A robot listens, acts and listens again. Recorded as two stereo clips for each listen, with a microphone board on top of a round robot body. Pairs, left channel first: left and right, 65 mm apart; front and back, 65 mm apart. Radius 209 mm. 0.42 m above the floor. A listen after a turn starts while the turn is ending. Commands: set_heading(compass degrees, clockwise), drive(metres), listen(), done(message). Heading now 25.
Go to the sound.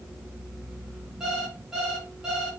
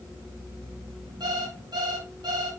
set_heading(200)
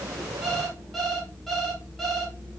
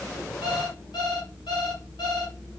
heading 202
drive(1.0)
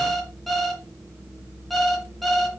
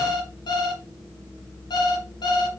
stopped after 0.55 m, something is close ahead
done("Blocked. The alarm clock is further on, straight ahead.")